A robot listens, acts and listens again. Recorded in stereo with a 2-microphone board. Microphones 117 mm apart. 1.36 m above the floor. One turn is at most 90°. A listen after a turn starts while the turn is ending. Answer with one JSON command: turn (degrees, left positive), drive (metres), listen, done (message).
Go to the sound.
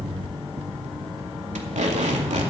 {"turn": -90}
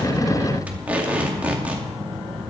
{"turn": -15}
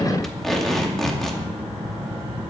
{"drive": 1.0}
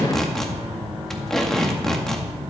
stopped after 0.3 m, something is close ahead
{"done": "Something is in my way. I am facing the tape being pulled but have not reached it."}